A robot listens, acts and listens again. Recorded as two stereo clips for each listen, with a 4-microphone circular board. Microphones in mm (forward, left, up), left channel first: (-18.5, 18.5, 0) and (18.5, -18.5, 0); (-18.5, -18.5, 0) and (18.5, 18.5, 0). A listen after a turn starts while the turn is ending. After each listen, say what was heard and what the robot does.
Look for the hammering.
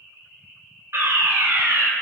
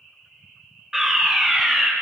Keep listening.
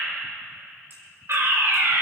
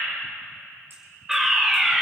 Keep listening.
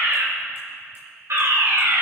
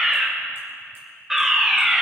I can't make out hammering, only a fire alarm.